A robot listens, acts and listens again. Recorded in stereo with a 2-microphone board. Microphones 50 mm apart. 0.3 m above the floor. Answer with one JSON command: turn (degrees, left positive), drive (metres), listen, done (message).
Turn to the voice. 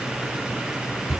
{"listen": true}
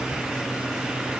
{"listen": true}
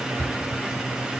{"done": "I can't make out anyone speaking."}